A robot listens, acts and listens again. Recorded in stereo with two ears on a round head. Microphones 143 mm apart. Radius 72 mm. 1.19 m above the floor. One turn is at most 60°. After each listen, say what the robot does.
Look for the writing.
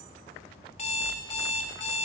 Keep listening.
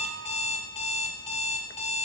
Keep listening.
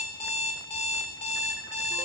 I can't make out writing, only an alarm clock.